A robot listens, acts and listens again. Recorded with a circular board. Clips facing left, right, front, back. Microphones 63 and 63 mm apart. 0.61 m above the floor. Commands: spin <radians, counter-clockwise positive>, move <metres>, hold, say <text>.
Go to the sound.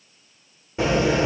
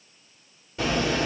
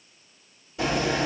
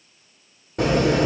spin 2.71
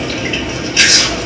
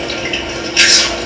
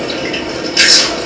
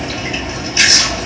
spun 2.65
move 1.0
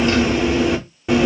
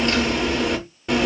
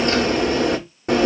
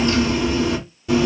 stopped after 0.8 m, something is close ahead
spin 0.17
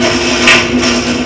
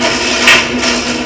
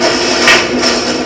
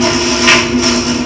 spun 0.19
say Arrived at the chewing, straight ahead.